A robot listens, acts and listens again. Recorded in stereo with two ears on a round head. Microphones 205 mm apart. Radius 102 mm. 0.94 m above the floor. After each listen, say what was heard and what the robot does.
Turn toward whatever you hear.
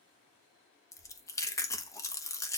Turn 30° left.
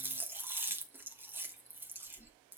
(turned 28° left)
So it is at 10° right. Turn 10° right.
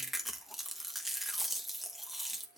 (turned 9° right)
Facing the chewing.